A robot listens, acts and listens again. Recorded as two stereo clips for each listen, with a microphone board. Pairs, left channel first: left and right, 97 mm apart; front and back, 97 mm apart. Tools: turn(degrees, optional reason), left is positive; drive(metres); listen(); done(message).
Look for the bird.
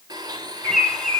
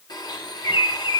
done("Found it: a bird, straight ahead, 2 to 4 m away.")